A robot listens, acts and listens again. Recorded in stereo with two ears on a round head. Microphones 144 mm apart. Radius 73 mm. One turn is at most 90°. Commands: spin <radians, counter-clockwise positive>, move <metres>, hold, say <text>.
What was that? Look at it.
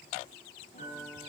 spin 0.79
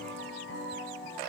spin 1.57
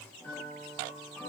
spin 0.17
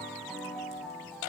say Facing the piano.